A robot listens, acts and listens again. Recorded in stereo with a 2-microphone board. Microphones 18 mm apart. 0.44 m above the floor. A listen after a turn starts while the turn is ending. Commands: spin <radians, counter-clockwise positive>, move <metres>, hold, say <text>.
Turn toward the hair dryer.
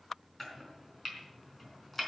hold
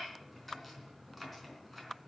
hold
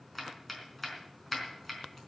say I can't make out a hair dryer, only chopping.